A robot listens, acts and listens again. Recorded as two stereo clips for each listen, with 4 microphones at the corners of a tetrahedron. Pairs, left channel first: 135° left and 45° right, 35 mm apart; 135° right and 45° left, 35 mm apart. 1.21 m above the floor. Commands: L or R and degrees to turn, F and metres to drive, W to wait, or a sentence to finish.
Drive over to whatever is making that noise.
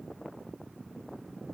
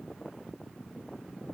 W
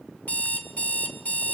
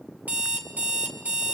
L90
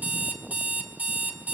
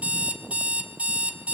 F1.0
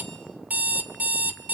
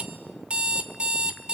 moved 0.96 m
R10
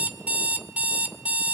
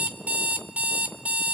F1.0
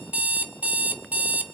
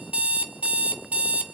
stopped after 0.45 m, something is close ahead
Arrived at the alarm clock, straight ahead.